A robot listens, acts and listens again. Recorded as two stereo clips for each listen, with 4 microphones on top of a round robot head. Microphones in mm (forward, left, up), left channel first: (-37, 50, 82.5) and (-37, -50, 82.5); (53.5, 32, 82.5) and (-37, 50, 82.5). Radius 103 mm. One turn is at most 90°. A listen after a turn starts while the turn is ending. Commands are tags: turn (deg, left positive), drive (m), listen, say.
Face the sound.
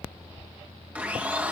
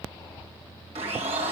<turn deg="-90"/>
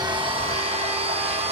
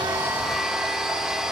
<turn deg="-90"/>
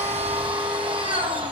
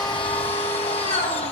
<turn deg="-40"/>
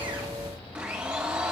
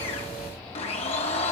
<turn deg="-10"/>
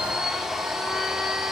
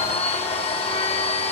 <say>Facing the blender.</say>